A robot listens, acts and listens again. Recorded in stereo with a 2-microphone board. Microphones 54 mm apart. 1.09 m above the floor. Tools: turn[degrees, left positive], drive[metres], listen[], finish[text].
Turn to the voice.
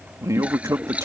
Action: turn[-90]
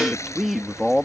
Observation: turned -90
Action: finish[Found it: a man speaking, straight ahead.]